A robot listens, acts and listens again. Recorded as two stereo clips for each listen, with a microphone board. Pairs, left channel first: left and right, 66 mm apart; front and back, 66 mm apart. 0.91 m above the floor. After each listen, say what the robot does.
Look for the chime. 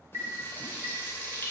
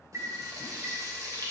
Turn 130° right.
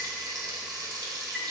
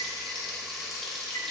Keep listening.
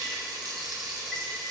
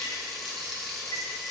Keep listening.
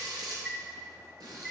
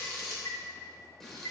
Facing the chime, 2 to 4 m away.